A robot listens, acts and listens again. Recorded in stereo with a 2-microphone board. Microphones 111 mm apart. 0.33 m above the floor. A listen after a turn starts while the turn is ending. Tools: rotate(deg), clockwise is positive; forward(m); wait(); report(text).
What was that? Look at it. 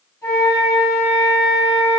rotate(-30)
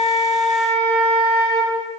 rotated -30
report("Facing the flute.")